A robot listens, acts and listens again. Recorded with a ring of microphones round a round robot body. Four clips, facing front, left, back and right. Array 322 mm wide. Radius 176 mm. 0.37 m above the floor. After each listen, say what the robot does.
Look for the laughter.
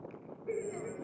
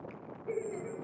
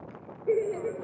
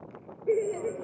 Turn 130° right.
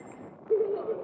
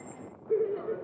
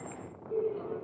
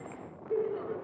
Turn 25° left.
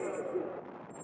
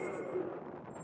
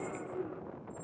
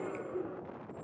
Facing the laughter, 2 to 4 m away.